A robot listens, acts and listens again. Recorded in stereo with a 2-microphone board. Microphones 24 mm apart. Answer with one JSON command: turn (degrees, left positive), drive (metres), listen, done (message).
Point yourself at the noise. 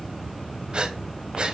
{"turn": -50}
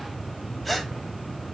{"done": "Found it: breathing, straight ahead, under 1 m away."}